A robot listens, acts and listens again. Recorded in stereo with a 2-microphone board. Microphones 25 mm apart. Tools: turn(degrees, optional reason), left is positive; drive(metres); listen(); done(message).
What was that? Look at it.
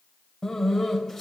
turn(degrees=30)
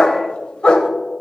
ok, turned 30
turn(degrees=145, reason="So it is at 145° left.")
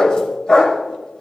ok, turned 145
turn(degrees=40, reason="The dog barking is now 40° left.")
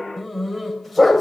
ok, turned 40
turn(degrees=10, reason="The dog barking is now 10° left.")
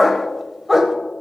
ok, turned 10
done("Facing the dog barking.")